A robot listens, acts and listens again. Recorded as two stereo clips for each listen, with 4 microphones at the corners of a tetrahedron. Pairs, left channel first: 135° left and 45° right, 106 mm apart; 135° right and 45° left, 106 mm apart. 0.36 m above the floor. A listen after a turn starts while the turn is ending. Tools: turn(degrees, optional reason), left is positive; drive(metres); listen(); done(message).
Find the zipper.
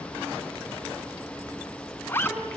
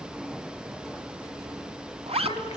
turn(degrees=65, reason="The zipper: 65° left.")
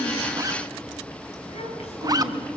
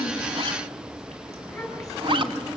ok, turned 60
done("Facing the zipper, 1 to 2 m away.")